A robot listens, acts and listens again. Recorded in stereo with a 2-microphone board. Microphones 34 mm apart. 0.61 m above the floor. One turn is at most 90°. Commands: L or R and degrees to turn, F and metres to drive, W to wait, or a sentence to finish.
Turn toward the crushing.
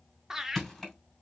L30
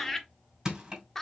R25
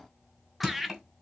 R10
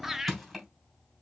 Found it: crushing, straight ahead.